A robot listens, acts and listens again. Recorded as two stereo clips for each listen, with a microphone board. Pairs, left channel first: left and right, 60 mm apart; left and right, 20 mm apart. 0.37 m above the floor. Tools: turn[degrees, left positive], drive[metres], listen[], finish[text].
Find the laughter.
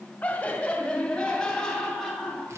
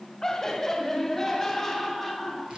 Action: turn[30]
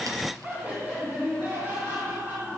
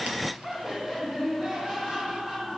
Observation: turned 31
Thought: So it is at 35° right.
Action: turn[-35]
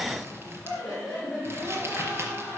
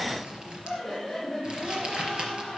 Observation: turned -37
Action: finish[Found it: laughter, straight ahead.]